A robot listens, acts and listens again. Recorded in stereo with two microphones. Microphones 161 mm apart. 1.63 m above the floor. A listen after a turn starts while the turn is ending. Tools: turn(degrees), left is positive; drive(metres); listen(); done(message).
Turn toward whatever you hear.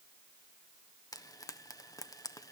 turn(degrees=20)
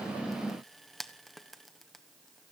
done("Facing the frying, 1 to 2 m away.")